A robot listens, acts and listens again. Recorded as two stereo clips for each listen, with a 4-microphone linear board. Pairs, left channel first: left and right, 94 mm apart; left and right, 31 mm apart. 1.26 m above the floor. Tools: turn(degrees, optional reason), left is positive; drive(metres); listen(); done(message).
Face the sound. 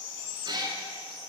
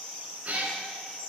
turn(degrees=-50, reason="The cat meowing: about 50° right or 130° right.")
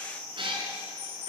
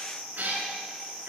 turn(degrees=-65, reason="So it is at 65° right.")
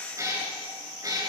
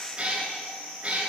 turn(degrees=-40, reason="The cat meowing is now 40° right.")
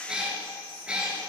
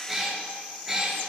turn(degrees=-10, reason="The cat meowing is now 10° right.")
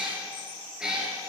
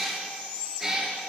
done("Found it: a cat meowing, straight ahead.")